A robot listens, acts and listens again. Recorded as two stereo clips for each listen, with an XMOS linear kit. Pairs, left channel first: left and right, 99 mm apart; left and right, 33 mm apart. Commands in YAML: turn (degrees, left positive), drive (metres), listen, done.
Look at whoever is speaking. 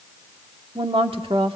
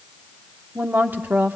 turn: -65
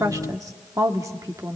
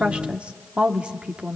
turn: -40
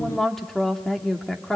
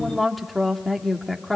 done: "Facing the woman speaking, 1 to 2 m away."